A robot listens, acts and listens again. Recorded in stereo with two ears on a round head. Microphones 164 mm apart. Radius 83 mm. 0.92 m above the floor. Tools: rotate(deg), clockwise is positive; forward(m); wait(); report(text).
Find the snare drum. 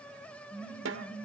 rotate(90)
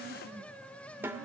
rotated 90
rotate(10)
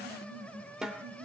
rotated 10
report("Facing the snare drum.")